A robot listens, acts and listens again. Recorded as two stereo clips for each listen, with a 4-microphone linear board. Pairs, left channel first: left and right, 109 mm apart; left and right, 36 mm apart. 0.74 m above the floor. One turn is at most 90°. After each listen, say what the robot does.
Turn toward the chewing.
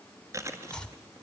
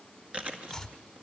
Turn 30° right.
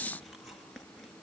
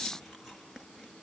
Facing the chewing.